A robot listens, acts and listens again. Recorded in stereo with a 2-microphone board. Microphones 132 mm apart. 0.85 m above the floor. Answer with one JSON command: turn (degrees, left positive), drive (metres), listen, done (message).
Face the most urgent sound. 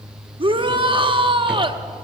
{"turn": -40}
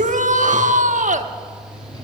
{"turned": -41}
{"turn": -100}
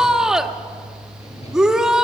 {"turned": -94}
{"done": "Found it: a shout, straight ahead, 1 to 2 m away."}